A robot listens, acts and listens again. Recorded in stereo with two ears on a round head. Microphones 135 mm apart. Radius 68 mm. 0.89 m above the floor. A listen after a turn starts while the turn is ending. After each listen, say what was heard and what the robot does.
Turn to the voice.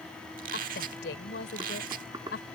Turn 90° left.
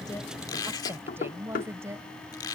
So it is at 20° right. Turn 20° right.
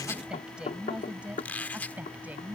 The woman speaking is now 10° right. Turn 10° right.
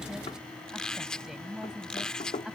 Facing the woman speaking.